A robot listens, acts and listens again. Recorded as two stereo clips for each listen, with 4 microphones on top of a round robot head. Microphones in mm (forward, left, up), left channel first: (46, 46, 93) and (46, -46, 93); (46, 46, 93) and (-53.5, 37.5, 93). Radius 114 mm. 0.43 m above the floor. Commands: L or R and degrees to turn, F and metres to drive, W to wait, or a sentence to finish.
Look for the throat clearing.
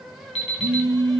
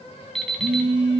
W
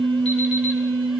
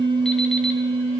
W
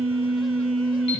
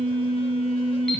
I can't make out throat clearing, only a phone buzzing and an alarm clock.